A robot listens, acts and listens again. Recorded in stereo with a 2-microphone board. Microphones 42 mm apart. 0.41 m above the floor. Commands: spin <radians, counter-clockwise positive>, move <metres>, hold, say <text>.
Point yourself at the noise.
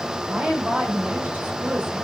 spin -0.70
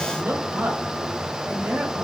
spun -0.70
spin -0.87
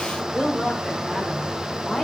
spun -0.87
spin 0.17
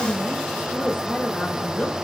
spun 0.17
spin 0.26
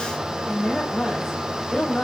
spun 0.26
say Found it: a woman speaking, straight ahead.